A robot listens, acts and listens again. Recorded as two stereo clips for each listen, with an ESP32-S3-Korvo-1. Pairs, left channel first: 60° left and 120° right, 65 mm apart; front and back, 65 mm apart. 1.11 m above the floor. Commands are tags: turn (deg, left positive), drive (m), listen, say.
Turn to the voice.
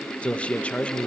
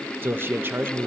<turn deg="130"/>
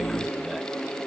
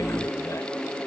<listen/>
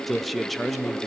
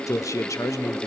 <turn deg="-25"/>
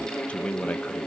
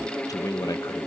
<say>Facing the man speaking.</say>